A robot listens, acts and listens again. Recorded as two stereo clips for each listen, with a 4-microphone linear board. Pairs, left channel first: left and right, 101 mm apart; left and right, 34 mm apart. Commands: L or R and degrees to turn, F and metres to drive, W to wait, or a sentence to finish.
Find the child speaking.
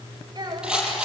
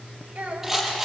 R40
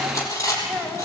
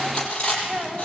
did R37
Found it: a child speaking, straight ahead.